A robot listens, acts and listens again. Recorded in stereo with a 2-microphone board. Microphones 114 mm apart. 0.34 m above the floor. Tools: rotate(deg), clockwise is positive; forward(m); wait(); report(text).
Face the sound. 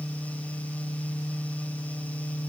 wait()
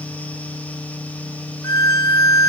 rotate(-30)
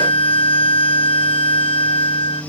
rotate(-110)
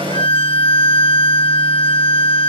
rotate(-60)
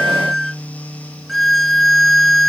report("Found it: a violin, straight ahead.")